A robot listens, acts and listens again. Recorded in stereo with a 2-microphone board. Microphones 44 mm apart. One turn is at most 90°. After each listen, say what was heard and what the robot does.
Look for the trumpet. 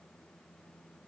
Keep listening.
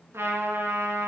Turn 90° right.
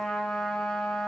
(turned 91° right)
Facing the trumpet.